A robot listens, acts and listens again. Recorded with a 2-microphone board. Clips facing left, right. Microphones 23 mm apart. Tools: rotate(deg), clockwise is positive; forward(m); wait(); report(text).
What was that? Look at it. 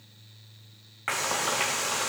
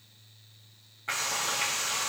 rotate(-90)
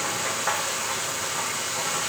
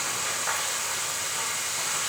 rotate(-15)
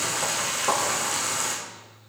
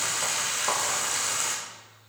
report("Facing the frying, over 4 m away.")